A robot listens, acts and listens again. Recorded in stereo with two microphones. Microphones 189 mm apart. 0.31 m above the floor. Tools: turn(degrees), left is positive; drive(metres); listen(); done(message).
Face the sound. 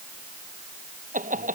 turn(degrees=-45)
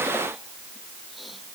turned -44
listen()
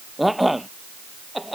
done("Facing the laughter.")